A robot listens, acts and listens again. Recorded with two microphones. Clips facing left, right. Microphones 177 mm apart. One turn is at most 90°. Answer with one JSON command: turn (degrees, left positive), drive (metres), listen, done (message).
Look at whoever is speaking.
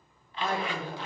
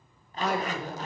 {"turn": -75}
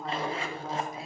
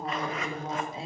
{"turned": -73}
{"turn": -30}
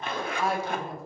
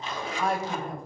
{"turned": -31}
{"done": "Facing the woman speaking, 1 to 2 m away."}